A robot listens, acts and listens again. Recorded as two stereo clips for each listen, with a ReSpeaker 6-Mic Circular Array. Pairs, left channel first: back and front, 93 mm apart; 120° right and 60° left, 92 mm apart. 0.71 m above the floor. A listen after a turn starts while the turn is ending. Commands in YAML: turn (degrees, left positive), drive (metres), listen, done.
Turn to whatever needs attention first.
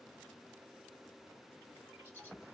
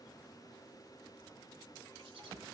listen: true
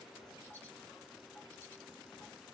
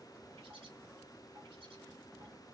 listen: true
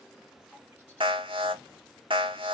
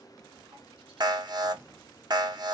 turn: 20
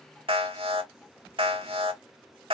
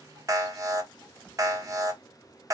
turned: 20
turn: 10
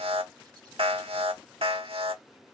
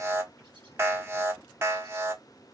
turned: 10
done: "Found it: an alarm, straight ahead."